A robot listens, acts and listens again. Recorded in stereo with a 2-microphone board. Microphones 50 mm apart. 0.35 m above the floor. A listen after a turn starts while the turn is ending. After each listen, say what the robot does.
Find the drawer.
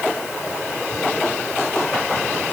Keep listening.
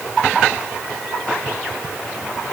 Keep listening.
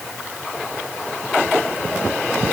I can't make out a drawer.